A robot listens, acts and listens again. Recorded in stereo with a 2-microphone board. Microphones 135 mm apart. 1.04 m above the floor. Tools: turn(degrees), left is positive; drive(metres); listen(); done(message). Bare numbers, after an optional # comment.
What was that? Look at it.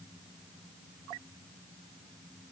listen()
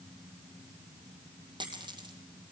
# The dropped coin: about 35° right or 145° right.
turn(-35)
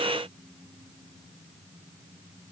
listen()
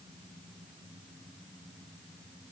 done("I heard a dropped coin, but can't make it out now. It was about straight ahead or 110° right.")